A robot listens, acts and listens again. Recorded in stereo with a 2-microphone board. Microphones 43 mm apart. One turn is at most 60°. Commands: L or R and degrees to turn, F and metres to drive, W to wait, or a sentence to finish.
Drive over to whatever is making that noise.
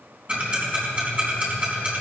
R30
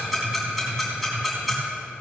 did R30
F1.0
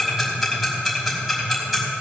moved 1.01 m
F1.0
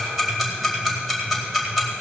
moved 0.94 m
F1.0
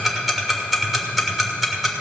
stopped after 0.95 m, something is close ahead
I am next to the ticking.